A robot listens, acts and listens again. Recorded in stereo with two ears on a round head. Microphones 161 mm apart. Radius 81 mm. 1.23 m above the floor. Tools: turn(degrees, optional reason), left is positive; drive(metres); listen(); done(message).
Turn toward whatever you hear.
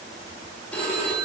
turn(degrees=30)
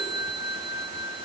turn(degrees=140, reason="So it is at 140° left.")
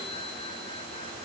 turn(degrees=-15, reason="The phone ringing is now 15° right.")
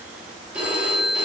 done("Facing the phone ringing, 1 to 2 m away.")